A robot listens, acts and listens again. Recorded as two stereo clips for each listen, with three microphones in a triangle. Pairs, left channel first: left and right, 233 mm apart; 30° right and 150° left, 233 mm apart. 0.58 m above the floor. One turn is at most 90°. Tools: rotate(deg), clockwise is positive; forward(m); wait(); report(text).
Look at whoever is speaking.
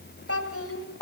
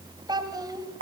rotate(-75)
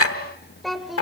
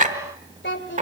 report("Found it: a child speaking, straight ahead.")